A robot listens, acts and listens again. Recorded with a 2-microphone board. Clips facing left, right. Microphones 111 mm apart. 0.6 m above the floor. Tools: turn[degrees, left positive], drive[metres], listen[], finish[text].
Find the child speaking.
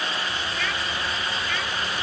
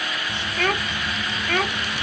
Thought: The child speaking: about 55° right or 125° right.
Action: turn[-55]
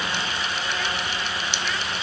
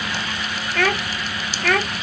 Thought: So it is at 65° right.
Action: turn[-65]
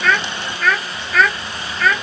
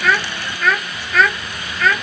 Action: finish[Facing the child speaking.]